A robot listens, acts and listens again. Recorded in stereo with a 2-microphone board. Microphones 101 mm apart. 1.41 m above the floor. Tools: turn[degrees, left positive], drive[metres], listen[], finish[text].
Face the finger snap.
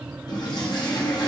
Action: listen[]
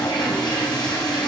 Action: listen[]
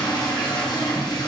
Action: finish[I can't make out a finger snap to turn to.]